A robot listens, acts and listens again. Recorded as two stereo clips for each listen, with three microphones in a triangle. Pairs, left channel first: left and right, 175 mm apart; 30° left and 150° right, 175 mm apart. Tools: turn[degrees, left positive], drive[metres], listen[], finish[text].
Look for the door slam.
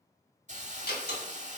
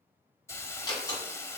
Thought: The door slam: 95° left.
Action: turn[95]
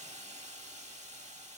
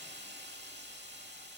Action: finish[I heard a door slam from this way, but can't make it out now.]